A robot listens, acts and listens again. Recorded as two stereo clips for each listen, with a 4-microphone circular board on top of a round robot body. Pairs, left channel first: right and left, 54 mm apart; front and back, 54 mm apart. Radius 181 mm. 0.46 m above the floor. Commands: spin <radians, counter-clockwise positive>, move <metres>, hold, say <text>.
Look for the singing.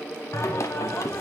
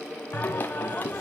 spin -1.05
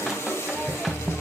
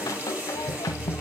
say Facing the singing, under 1 m away.